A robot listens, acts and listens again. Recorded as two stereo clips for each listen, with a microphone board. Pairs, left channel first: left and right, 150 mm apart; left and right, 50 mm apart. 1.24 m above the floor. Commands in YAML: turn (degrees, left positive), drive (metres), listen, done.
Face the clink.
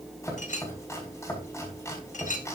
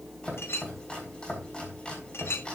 turn: 55
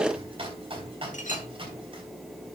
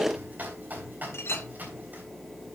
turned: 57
turn: 60
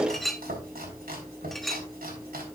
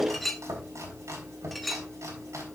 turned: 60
done: "Found it: a clink, straight ahead, 1 to 2 m away."